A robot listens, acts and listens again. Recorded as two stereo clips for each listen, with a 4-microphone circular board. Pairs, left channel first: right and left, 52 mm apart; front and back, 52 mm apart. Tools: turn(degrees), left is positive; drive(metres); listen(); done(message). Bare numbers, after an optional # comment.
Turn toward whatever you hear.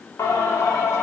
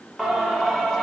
# The singing: 80° right.
turn(-80)
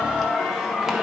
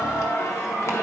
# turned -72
# The singing is now 10° left.
turn(10)
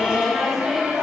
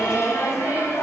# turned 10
# The singing is now 15° left.
turn(15)
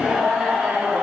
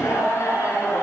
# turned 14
# The singing is now 20° left.
turn(20)
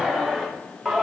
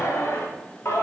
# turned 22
# The singing is now 10° left.
turn(10)
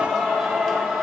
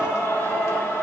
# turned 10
# The singing is now 10° left.
turn(10)
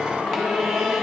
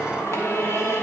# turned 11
done("Found it: singing, straight ahead, 2 to 4 m away.")